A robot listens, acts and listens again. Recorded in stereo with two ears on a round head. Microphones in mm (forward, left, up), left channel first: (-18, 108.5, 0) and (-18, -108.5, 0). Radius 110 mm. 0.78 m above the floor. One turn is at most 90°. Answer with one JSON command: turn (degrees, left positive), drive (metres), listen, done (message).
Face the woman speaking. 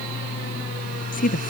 {"turn": 40}
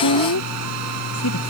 {"turn": 90}
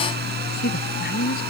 {"turn": 40}
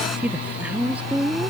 {"done": "Found it: a woman speaking, straight ahead."}